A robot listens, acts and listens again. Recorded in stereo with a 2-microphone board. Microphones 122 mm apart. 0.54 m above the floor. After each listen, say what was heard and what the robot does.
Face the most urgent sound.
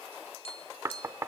Keep listening.
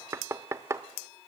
Keep listening.
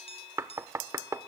I can't make out anything urgent, only knocking and tapping.